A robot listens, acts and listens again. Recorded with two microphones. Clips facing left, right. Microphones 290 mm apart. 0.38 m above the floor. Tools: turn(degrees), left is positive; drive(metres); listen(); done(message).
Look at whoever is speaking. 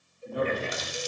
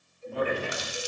turn(degrees=15)
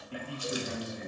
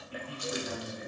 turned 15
turn(degrees=150)
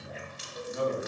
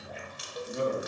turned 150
turn(degrees=-40)
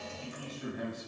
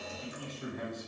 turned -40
turn(degrees=10)
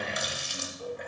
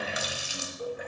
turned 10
listen()
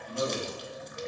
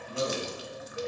done("Facing the man speaking.")